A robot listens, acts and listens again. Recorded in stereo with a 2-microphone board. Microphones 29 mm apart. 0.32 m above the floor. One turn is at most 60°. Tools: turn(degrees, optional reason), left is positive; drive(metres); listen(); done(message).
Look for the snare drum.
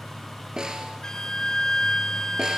turn(degrees=-25, reason="The snare drum: about 25° right or 155° right.")
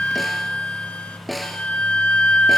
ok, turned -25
done("Found it: a snare drum, straight ahead.")